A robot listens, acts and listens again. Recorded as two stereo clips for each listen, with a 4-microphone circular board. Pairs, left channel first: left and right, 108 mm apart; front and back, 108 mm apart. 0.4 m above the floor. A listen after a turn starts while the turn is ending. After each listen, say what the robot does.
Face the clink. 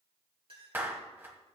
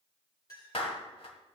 Turn 55° right.
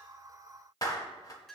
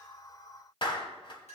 Found it: a clink, straight ahead, over 4 m away.